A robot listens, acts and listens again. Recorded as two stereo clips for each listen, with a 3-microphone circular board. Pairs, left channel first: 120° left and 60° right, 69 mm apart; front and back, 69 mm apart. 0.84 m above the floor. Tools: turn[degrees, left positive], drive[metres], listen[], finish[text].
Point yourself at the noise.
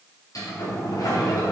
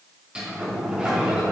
Thought: The sliding door: 105° left.
Action: turn[105]
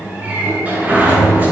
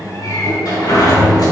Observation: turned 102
Action: finish[Found it: a sliding door, straight ahead.]